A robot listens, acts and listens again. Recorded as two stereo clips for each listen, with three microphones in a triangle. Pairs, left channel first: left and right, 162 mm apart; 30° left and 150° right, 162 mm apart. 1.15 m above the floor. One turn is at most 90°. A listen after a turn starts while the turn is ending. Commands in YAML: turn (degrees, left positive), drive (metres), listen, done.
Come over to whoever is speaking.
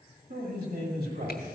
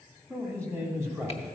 turn: -75
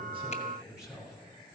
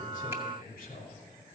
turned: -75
drive: 1.0
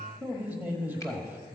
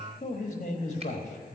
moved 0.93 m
turn: -10
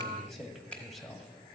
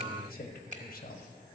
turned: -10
drive: 1.0
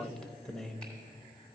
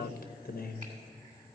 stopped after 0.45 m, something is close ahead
done: "I am next to the man speaking."